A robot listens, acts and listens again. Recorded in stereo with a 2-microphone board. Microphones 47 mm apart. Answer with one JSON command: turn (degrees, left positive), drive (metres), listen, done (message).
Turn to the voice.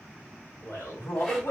{"turn": 90}
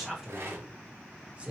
{"turn": -30}
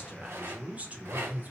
{"turn": -40}
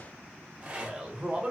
{"turn": -20}
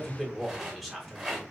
{"done": "Found it: a man speaking, straight ahead, 1 to 2 m away."}